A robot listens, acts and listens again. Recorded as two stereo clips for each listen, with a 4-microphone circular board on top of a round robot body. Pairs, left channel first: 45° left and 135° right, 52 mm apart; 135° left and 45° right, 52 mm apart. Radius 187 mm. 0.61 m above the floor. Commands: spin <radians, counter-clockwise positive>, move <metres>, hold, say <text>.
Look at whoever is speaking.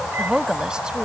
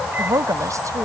spin -1.05
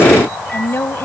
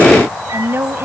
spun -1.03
say Facing the woman speaking.